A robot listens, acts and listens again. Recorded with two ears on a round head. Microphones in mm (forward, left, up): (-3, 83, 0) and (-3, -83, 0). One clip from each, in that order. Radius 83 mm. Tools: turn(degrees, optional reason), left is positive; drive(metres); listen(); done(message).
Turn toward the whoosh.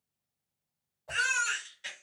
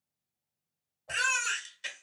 turn(degrees=35, reason="The whoosh: about 35° left or 145° left.")
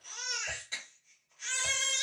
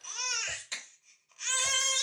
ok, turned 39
listen()
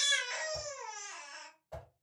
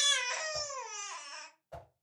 done("Found it: a whoosh, straight ahead.")